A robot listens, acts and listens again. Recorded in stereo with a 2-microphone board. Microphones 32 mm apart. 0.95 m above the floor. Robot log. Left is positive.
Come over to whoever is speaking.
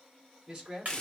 note: The man speaking: about 30° right or 150° right.
cmd yaw -30
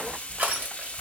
cmd idle
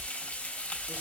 cmd idle
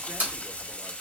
end: I heard a man speaking, but can't make it out now. It was about straight ahead or 120° right. I did not reach it.